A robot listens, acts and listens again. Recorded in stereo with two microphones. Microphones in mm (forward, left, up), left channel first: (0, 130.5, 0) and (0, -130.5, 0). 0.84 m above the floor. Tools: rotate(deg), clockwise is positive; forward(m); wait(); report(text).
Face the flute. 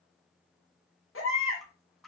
wait()
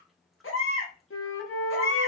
rotate(-55)
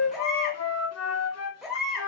rotate(-70)
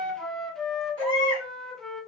report("Found it: a flute, straight ahead, under 1 m away.")